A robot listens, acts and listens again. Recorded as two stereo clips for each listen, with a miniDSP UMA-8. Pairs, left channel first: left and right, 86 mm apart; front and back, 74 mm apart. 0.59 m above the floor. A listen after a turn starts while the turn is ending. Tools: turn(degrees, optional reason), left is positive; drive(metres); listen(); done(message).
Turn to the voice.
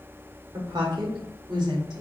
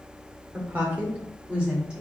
turn(degrees=-110, reason="The woman speaking: 110° right.")
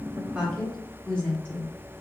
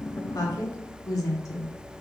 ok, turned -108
turn(degrees=20, reason="The woman speaking is now 20° left.")
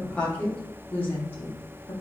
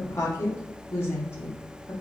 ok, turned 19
turn(degrees=45, reason="The woman speaking is now 45° left.")
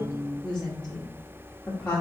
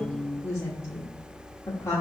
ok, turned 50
turn(degrees=15, reason="The woman speaking is now 15° left.")
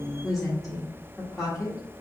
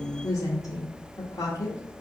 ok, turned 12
done("Facing the woman speaking.")